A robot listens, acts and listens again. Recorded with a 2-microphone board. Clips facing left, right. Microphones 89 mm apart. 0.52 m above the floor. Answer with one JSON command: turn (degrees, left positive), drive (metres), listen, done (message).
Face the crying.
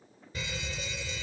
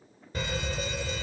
{"listen": true}
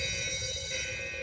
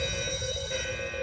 {"listen": true}
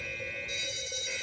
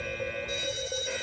{"done": "I can't make out crying, only a fire alarm."}